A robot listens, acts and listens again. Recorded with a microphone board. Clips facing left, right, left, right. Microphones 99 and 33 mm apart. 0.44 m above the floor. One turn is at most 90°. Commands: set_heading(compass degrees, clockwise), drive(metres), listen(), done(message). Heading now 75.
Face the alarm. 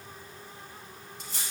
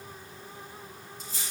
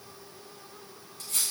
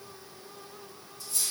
listen()
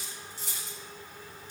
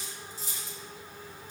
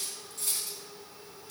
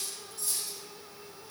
listen()
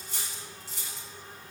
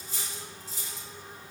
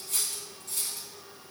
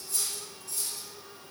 done("I can't make out an alarm, only cutlery clinking.")